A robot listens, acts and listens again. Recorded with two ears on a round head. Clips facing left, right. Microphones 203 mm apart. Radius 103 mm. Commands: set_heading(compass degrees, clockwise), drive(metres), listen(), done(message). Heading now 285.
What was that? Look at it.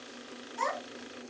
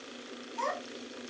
set_heading(240)
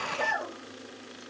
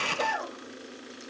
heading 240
done("Facing the child speaking, 2 to 4 m away.")